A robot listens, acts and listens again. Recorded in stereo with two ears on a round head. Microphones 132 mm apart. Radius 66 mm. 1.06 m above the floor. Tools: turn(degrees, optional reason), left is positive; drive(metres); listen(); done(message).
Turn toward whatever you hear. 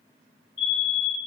turn(degrees=90)
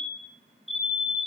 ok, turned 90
done("Facing the fire alarm, over 4 m away.")